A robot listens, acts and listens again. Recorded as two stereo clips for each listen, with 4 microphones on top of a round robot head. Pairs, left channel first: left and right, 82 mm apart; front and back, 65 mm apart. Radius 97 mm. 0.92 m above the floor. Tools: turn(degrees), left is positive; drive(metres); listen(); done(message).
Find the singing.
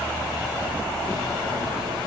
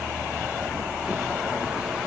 listen()
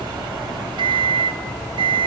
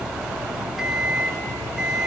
listen()
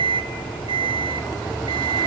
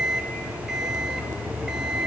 done("I can't make out singing to turn to.")